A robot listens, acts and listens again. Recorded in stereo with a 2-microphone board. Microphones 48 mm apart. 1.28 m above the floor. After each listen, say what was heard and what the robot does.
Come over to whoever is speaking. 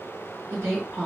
Turn 90° right.
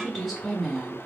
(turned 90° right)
So it is at 10° left. Turn 10° left.
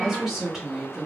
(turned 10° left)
Drive 1.0 m forward.
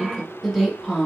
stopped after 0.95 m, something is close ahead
Arrived at the woman speaking, straight ahead.